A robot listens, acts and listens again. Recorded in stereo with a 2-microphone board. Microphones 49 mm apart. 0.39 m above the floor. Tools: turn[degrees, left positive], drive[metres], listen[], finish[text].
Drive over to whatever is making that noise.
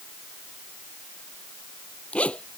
Thought: The zipper: about 25° left or 155° left.
Action: turn[25]
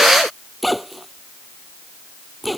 Action: drive[1.0]
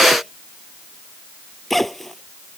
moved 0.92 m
Action: drive[1.0]
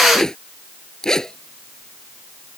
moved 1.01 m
Thought: The zipper is now 10° left.
Action: turn[10]
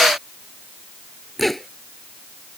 Action: drive[1.0]
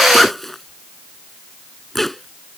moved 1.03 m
Action: drive[1.0]
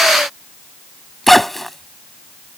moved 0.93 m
Action: drive[1.0]
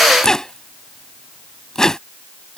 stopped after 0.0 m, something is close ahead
Thought: The zipper is now 10° left.
Action: turn[10]
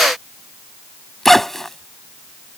Action: finish[I am next to the zipper.]